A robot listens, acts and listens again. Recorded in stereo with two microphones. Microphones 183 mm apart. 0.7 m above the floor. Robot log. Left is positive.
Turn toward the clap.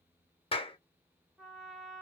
note: The clap: about 30° left or 150° left.
cmd yaw +30
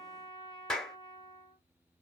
end: Found it: a clap, straight ahead, under 1 m away.